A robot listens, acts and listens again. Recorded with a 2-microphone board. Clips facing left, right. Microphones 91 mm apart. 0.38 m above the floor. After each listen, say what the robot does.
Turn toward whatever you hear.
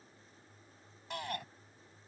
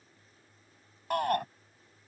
Turn 50° right.
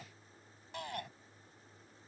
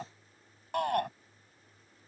Turn 70° right.
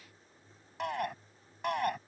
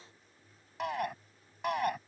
Found it: a shout, straight ahead.